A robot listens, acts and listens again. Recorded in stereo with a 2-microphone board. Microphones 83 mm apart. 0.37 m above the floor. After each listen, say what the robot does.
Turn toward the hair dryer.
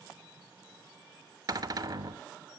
Keep listening.
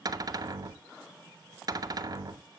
Keep listening.
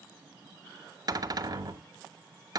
I can't make out a hair dryer, only a cupboard door.